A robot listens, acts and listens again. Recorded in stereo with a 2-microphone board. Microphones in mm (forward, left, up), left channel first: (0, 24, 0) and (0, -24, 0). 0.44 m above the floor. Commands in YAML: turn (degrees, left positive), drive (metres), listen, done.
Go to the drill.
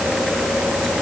listen: true
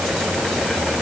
listen: true
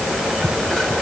done: "I can't make out a drill to turn to."